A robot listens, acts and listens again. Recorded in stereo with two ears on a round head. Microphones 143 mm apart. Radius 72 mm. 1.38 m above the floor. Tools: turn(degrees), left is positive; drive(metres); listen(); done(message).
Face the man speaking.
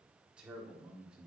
turn(degrees=-30)
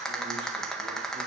listen()
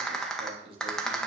turn(degrees=-145)
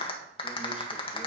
listen()
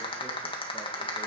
listen()
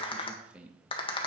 turn(degrees=-10)
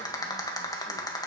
listen()
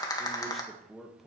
done("Found it: a man speaking, straight ahead.")